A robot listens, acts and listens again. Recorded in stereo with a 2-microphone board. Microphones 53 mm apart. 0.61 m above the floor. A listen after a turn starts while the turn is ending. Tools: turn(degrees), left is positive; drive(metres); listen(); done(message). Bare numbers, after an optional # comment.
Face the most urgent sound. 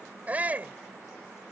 # The shout: about 30° right or 150° right.
turn(-30)
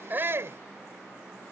listen()
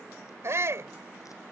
# So it is at 120° right.
turn(-120)
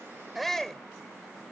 done("Facing the shout.")